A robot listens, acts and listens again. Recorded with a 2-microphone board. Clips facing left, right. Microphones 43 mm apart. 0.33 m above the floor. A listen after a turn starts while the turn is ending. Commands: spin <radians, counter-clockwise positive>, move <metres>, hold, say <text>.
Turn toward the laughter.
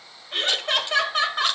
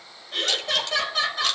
spin 0.79
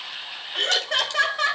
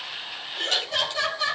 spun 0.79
spin 1.83
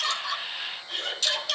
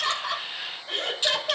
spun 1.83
spin -0.96
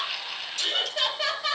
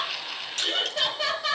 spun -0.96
say Found it: laughter, straight ahead, over 4 m away.